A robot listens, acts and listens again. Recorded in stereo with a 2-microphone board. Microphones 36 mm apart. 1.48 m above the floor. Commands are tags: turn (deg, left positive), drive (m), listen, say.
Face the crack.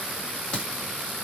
<turn deg="30"/>
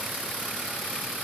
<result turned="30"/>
<listen/>
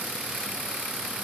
<say>I heard a crack, but can't make it out now. It was about straight ahead or 120° left.</say>